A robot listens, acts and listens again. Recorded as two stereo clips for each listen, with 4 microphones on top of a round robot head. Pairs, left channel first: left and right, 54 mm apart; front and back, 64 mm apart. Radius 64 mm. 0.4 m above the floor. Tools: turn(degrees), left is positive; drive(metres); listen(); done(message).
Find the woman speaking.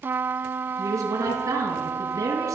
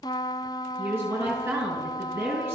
turn(degrees=-115)
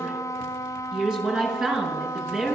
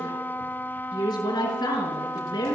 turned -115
turn(degrees=-15)
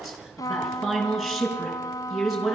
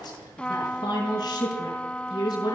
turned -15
done("Facing the woman speaking, over 4 m away.")